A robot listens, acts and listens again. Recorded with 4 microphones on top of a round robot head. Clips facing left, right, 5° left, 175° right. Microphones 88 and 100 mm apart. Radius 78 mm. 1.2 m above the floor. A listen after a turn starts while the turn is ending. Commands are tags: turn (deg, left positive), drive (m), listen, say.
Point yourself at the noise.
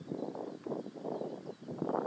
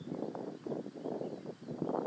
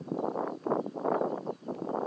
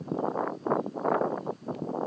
<listen/>
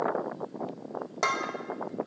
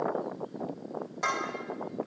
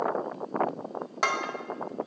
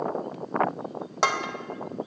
<turn deg="120"/>
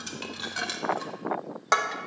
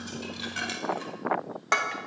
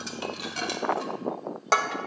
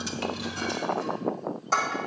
<turn deg="20"/>
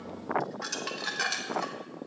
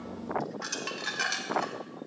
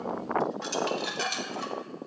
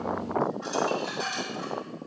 <say>Found it: dishes clattering, straight ahead.</say>